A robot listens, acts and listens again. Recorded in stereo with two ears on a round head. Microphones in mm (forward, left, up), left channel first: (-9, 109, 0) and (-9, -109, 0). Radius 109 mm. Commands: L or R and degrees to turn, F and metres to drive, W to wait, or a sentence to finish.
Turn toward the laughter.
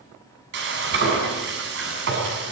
W
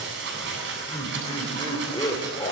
L15
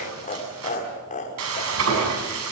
L30
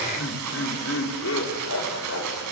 L120
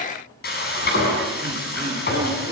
W
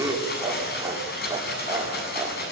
R15
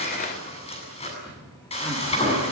W
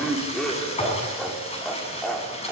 Facing the laughter.